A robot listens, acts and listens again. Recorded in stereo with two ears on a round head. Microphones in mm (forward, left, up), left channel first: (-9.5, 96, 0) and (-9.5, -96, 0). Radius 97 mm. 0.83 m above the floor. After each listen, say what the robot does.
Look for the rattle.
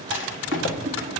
Turn 60° left.
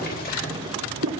Turn 50° left.
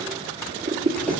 Keep listening.
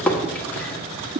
Turn 10° left.
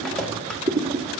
Found it: a rattle, straight ahead, 1 to 2 m away.